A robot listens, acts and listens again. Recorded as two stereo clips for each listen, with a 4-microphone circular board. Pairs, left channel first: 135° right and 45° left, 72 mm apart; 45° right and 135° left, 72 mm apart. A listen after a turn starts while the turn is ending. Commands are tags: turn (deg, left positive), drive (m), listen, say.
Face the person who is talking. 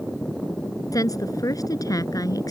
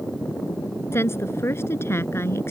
<turn deg="-100"/>
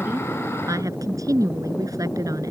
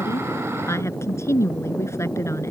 <say>Found it: a woman speaking, straight ahead.</say>